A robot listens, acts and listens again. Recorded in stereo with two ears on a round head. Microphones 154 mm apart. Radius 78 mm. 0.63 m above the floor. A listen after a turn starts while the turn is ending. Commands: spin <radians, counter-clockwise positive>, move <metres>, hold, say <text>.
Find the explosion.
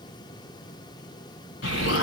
spin 1.57
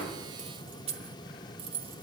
say I heard an explosion from this way, but can't make it out now.